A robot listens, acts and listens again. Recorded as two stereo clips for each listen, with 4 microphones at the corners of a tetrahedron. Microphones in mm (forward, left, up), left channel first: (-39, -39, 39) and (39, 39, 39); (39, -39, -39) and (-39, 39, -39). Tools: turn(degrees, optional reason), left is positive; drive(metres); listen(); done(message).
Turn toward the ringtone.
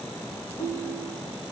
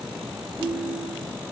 turn(degrees=-145, reason="The ringtone: 145° right.")
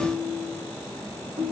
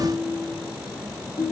done("Facing the ringtone.")